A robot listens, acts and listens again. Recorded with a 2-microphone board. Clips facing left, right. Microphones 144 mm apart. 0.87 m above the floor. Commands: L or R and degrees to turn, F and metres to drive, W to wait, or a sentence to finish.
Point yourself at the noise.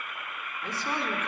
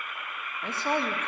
R65
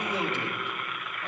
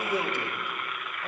R15
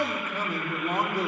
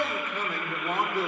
L15
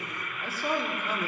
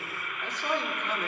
L10
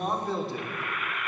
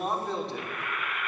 Facing the man speaking.